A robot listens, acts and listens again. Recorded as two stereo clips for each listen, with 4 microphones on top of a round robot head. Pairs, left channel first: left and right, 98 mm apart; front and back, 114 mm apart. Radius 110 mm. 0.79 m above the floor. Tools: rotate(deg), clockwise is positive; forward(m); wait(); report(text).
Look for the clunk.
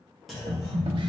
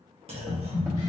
rotate(-180)
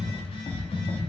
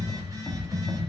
report("I heard a clunk from this way, but can't make it out now.")